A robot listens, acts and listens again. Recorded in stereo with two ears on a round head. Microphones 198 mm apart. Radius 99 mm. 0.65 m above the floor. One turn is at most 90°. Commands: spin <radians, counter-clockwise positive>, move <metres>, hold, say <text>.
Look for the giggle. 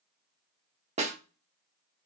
hold
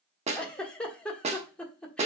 spin 0.52
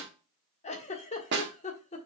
spin 1.57
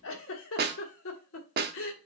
spin 1.48
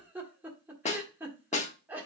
spin -0.17
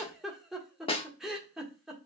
say Found it: a giggle, straight ahead, 1 to 2 m away.